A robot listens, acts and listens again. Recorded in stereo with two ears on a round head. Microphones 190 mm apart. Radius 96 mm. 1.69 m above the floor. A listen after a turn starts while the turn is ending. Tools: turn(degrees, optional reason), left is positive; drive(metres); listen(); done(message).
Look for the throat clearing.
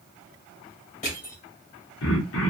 turn(degrees=65, reason="The throat clearing: about 65° left or 115° left.")
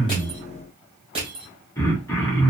turn(degrees=15, reason="So it is at 15° left.")
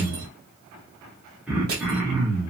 done("Facing the throat clearing.")